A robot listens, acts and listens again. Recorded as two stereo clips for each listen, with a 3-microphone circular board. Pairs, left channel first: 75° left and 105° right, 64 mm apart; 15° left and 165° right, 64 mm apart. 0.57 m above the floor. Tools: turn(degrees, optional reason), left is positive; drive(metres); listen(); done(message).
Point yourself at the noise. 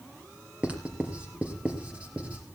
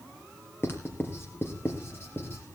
turn(degrees=-35, reason="The writing: 35° right.")
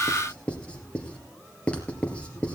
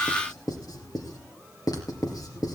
done("Found it: writing, straight ahead.")